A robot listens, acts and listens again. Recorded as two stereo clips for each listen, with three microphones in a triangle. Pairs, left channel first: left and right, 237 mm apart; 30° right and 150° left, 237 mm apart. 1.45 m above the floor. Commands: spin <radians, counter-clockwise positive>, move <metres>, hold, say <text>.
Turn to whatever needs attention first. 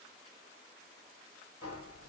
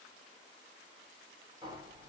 hold
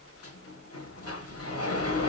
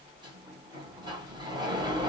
hold
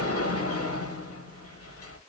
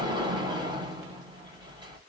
say I can't make out anything urgent to turn to.